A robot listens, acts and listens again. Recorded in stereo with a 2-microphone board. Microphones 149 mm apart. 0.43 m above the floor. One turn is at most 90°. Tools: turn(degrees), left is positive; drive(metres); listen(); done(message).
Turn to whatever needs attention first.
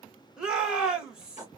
turn(degrees=-30)
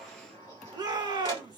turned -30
turn(degrees=-90)
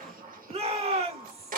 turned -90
turn(degrees=-55)
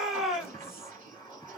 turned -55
done("Facing the shout.")